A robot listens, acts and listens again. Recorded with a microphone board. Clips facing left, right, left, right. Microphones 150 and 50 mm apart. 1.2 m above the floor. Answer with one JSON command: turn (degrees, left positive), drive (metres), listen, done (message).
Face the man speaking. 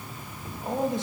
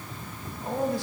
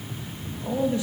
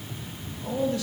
{"turn": 20}
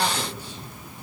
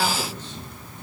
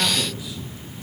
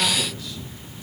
{"listen": true}
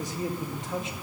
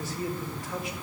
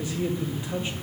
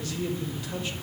{"turn": 20}
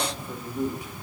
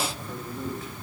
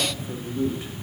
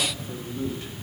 {"turn": 30}
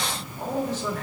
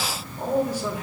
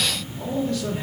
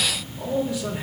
{"turn": -10}
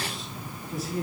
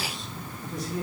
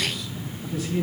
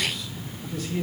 {"done": "Facing the man speaking."}